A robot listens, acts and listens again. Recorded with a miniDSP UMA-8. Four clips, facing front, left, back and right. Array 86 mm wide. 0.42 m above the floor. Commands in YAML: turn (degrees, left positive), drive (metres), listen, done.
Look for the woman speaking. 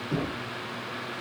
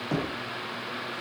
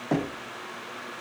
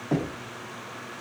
listen: true
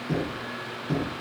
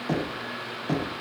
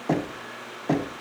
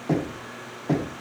listen: true
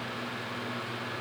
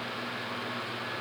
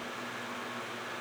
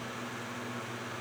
done: "I can't make out a woman speaking, only knocking."